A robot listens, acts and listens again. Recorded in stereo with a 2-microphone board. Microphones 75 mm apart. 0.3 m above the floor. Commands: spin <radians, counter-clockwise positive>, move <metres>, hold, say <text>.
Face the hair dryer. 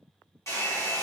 spin 0.79
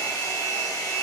spin 1.48
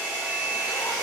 spin -0.44
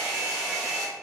spin -0.17
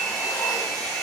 say Facing the hair dryer, 1 to 2 m away.